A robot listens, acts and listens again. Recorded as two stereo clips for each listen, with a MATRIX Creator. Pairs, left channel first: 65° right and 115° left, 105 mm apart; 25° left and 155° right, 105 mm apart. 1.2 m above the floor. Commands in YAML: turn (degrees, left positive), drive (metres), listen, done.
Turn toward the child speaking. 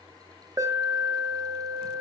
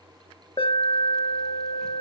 listen: true
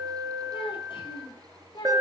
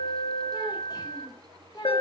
turn: -25
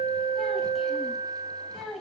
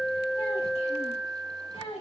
turn: 25
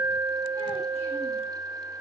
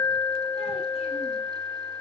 listen: true
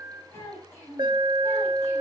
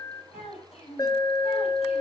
done: "Facing the child speaking, over 4 m away."